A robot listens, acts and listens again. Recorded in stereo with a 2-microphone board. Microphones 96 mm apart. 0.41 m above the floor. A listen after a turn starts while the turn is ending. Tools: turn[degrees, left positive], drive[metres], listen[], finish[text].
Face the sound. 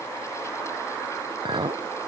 Thought: The clink: about 55° right or 125° right.
Action: turn[-55]
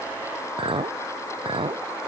Thought: So it is at 65° right.
Action: turn[-65]
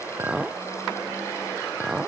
Action: finish[Found it: a clink, straight ahead.]